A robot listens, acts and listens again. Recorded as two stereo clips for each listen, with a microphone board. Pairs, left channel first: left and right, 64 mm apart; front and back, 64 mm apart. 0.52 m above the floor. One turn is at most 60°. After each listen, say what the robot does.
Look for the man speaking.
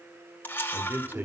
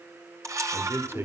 Turn 60° right.
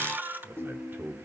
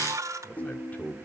Turn 45° right.
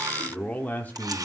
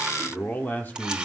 Turn 45° left.
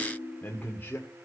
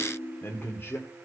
Turn 40° left.
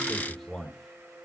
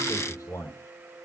Facing the man speaking.